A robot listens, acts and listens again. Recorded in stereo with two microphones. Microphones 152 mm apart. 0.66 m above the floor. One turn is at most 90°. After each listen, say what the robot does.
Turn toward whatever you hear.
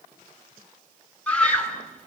Turn 30° left.
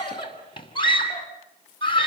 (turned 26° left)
Turn 90° left.
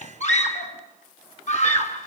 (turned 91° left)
Turn 55° left.
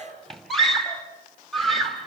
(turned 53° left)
Found it: a scream, straight ahead, over 4 m away.